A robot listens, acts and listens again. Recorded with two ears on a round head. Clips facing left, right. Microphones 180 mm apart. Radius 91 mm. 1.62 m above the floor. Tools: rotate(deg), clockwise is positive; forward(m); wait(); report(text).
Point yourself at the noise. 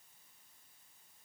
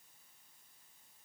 wait()
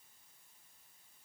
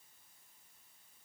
wait()
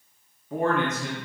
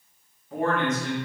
rotate(-65)
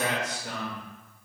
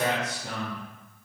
rotate(30)
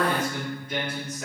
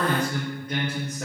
rotate(40)
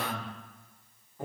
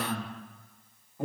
report("Facing the man speaking.")